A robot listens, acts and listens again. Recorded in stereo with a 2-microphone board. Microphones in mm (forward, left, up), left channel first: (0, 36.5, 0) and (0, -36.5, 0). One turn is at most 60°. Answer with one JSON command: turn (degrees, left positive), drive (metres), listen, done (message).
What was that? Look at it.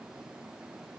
{"listen": true}
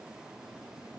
{"listen": true}
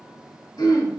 {"turn": 60}
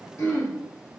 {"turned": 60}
{"turn": 45}
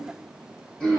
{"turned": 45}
{"turn": 10}
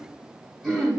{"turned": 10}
{"done": "Found it: throat clearing, straight ahead, 1 to 2 m away."}